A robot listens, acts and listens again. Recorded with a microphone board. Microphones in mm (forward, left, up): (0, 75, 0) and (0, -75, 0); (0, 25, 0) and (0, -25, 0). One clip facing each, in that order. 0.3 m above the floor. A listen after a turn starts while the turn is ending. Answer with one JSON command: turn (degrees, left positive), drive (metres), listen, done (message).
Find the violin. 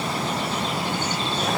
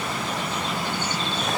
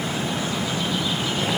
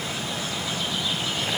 {"listen": true}
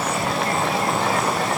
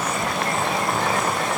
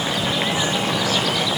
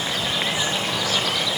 {"listen": true}
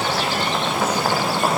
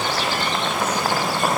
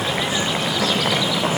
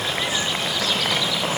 {"done": "I can't make out a violin to turn to."}